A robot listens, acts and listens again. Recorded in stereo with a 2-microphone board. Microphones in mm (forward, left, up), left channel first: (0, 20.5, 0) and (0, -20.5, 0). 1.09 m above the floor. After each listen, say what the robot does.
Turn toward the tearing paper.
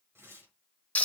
Turn 90° right.
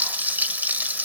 Keep listening.
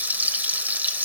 Keep listening.
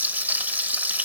I heard tearing paper from this way, but can't make it out now.